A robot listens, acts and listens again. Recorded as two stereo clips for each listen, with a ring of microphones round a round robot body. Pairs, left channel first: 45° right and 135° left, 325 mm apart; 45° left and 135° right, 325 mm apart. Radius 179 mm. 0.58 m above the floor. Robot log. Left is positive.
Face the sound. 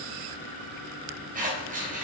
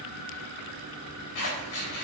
note: The scissors: 70° left.
cmd yaw +70
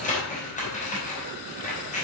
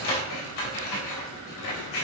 note: The scissors is now 20° left.
cmd yaw +20
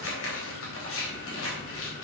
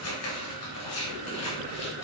end: Facing the scissors, 2 to 4 m away.